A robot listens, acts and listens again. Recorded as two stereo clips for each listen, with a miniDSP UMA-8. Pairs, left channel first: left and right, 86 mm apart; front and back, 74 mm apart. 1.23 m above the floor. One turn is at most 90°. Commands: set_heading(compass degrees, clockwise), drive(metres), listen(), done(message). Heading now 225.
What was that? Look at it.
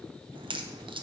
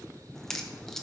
set_heading(310)
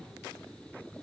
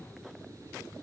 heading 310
done("I heard a crack from this way, but can't make it out now.")